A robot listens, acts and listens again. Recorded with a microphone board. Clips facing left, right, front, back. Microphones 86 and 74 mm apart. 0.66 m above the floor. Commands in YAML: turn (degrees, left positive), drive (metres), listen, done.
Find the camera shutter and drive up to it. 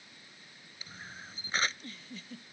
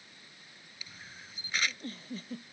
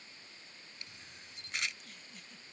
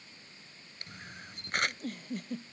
turn: 145
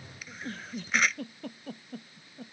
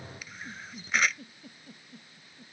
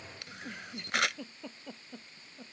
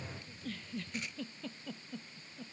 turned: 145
drive: 1.0
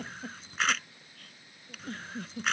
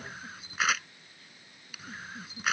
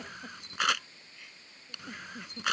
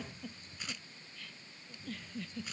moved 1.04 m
drive: 1.0
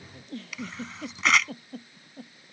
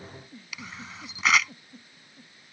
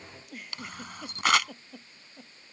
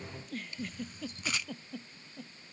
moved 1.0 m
drive: 1.0
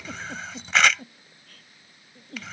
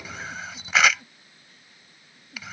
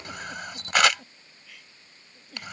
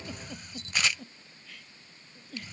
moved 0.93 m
drive: 1.0
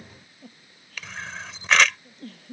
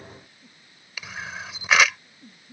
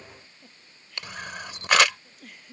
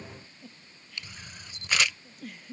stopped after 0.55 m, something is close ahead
turn: -10
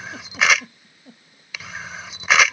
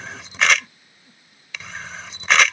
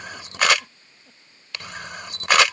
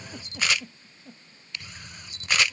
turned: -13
done: "Arrived at the camera shutter, straight ahead."